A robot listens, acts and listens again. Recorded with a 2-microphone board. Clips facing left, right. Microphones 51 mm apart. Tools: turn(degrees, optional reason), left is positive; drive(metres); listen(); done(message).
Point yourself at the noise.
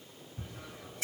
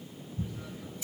turn(degrees=90)
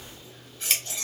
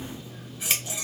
turn(degrees=-10, reason="So it is at 10° right.")
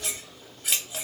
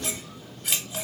done("Facing the scissors.")